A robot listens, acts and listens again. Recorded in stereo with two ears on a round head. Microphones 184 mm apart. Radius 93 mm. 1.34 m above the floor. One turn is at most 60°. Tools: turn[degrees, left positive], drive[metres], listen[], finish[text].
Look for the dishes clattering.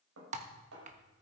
Thought: The dishes clattering: about 75° right or 105° right.
Action: turn[-60]
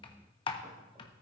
Action: listen[]
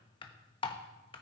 Action: listen[]
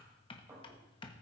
Thought: So it is at 15° right.
Action: turn[-15]
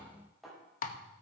Action: finish[Facing the dishes clattering, over 4 m away.]